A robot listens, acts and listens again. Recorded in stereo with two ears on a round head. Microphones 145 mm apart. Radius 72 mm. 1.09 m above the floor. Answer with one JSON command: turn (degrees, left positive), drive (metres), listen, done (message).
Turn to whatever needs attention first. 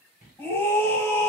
{"turn": 30}
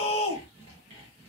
{"turn": 135}
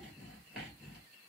{"listen": true}
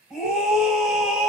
{"done": "Facing the scream."}